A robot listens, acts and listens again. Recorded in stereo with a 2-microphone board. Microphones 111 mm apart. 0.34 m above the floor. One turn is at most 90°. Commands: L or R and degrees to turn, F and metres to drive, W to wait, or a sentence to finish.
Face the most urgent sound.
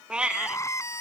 L25
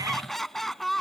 Found it: crying, straight ahead.